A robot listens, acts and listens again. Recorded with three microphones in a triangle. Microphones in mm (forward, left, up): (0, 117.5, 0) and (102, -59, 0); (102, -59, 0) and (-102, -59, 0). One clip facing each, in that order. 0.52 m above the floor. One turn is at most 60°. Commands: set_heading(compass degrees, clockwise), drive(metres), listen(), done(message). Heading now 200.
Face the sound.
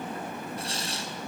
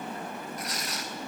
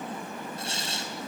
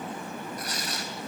set_heading(140)
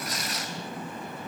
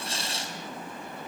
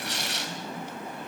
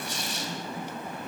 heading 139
done("Found it: tearing paper, straight ahead, 2 to 4 m away.")